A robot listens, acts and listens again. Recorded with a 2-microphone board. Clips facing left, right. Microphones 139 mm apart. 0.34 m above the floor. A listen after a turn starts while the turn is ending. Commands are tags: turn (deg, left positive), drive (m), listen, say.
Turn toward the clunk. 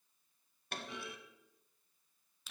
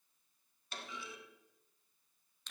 <turn deg="55"/>
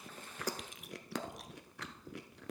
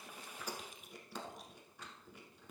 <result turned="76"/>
<listen/>
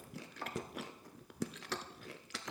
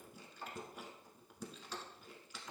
<say>I heard a clunk, but can't make it out now. It was about 20° right or 45° left.</say>